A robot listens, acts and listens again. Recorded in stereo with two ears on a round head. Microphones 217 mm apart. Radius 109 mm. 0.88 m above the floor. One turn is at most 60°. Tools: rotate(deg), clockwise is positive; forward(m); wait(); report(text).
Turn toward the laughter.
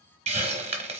wait()
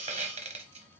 wait()
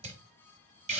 report("I can't make out laughter to turn to.")